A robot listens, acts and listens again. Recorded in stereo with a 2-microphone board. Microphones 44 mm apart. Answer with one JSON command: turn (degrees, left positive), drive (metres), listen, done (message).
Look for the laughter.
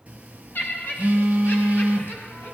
{"turn": 50}
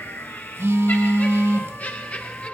{"turn": 30}
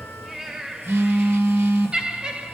{"turn": -20}
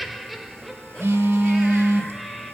{"done": "Facing the laughter, 1 to 2 m away."}